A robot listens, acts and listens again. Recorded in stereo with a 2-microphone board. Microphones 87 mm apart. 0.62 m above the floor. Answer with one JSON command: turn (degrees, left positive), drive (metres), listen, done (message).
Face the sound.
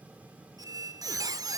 {"turn": -45}
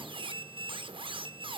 {"turn": -90}
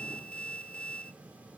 {"turn": 15}
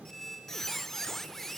{"done": "Found it: a squeak, straight ahead."}